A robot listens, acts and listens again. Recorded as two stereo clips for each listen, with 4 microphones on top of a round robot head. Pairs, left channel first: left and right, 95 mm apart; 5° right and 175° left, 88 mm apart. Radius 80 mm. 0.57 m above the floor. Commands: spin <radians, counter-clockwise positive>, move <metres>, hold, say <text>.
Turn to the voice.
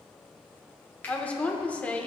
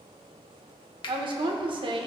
spin 2.88
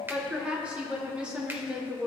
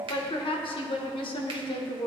spin -0.17
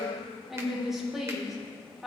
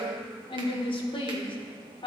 say Facing the woman speaking.